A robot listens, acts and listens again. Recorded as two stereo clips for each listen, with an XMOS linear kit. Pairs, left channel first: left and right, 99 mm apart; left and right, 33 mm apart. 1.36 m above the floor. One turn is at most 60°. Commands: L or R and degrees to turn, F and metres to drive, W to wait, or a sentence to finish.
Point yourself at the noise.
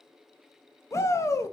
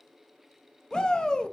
L30
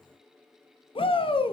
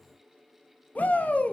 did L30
L60
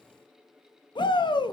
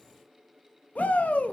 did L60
L55
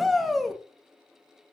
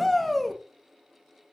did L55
Facing the shout.